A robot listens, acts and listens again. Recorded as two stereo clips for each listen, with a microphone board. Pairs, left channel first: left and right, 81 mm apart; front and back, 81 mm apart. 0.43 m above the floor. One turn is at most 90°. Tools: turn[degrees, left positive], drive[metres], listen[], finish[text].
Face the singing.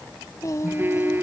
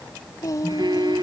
Thought: The singing: 45° left.
Action: turn[45]
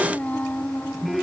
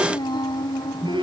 Thought: The singing is now 20° left.
Action: turn[20]
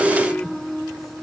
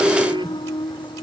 Action: finish[Facing the singing.]